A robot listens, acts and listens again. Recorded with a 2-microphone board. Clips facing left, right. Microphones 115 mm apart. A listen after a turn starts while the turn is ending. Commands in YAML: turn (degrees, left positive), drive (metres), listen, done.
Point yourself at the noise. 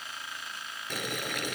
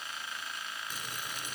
turn: 70
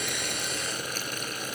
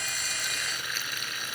turn: 40
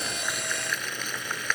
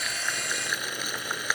turn: -10
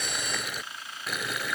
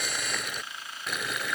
done: "Found it: boiling, straight ahead."